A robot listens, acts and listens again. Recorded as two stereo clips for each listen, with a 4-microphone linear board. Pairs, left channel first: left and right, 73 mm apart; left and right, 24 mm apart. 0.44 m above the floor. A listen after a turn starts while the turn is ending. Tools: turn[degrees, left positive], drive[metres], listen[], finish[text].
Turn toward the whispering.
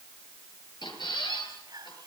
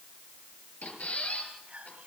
Thought: The whispering: about 60° right or 120° right.
Action: turn[-60]
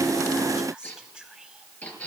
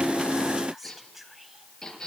Thought: So it is at 10° right.
Action: turn[-10]
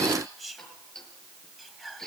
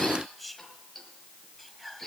Action: finish[Facing the whispering.]